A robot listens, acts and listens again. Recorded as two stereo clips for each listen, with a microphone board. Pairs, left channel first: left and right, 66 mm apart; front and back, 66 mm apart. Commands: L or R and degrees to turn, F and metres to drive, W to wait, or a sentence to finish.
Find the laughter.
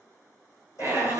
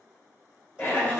R55
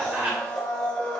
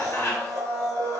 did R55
R30
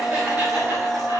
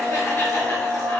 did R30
W
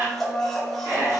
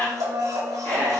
R65
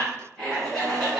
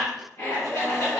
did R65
L10
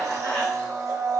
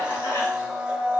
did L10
W
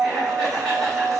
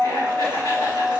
Found it: laughter, straight ahead, 2 to 4 m away.